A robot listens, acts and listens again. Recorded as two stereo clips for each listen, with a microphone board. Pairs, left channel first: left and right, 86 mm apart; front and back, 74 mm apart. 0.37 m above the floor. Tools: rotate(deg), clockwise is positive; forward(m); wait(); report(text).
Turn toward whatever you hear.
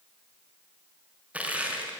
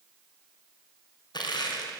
rotate(15)
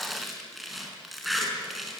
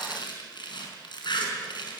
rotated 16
report("Facing the crushing.")